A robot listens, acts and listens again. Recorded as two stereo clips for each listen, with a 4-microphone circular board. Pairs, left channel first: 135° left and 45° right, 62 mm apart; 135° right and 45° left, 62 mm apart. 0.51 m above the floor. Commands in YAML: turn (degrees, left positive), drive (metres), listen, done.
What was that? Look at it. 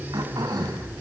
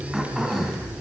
turn: -40
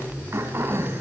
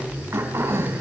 done: "Facing the throat clearing, over 4 m away."